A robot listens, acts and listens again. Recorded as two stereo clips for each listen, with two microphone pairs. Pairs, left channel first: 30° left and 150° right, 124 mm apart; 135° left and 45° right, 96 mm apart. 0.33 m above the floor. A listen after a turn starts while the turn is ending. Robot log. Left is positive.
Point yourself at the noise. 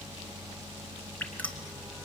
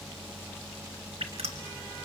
note: The dripping: 50° right.
cmd yaw -50
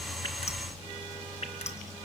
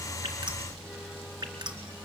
end: Facing the dripping, 2 to 4 m away.